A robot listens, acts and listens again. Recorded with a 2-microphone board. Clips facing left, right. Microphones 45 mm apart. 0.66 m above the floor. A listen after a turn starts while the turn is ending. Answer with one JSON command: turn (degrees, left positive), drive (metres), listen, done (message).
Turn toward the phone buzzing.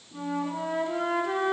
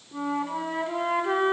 {"listen": true}
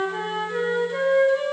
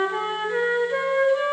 {"listen": true}
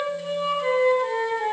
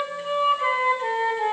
{"done": "I can't make out a phone buzzing to turn to."}